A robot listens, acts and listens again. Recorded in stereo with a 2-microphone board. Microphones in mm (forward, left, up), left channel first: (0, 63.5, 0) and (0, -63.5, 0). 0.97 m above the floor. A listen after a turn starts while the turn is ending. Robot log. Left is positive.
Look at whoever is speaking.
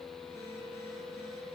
cmd idle
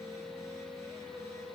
cmd idle
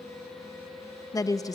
note: The woman speaking: about 30° left or 150° left.
cmd yaw +30
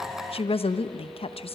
note: So it is at 120° left.
cmd yaw +120
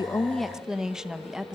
end: Facing the woman speaking.